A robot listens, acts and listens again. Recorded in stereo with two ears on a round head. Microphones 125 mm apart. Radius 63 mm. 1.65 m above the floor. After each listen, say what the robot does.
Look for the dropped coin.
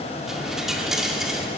Turn 30° left.
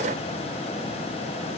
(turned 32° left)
Keep listening.
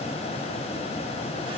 I heard a dropped coin, but can't make it out now. It was about 35° right or 150° left.